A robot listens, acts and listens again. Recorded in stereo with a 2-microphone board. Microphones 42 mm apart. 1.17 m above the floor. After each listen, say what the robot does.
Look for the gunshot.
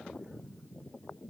Keep listening.
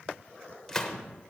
Turn 30° left.
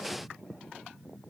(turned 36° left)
Keep listening.
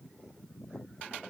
I heard a gunshot, but can't make it out now. It was about 25° right or 135° left.